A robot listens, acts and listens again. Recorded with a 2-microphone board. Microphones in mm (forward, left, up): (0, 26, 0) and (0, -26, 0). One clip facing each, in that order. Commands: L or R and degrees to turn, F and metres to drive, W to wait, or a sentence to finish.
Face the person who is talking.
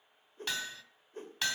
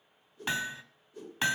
W
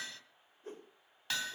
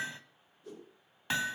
W
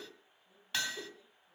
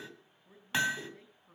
R55
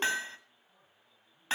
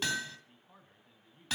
R65
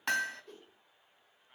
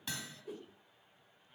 L25
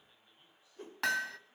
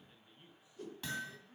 R20
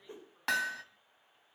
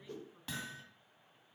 W
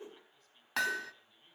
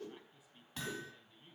R10
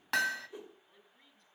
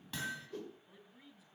Facing the man speaking, over 4 m away.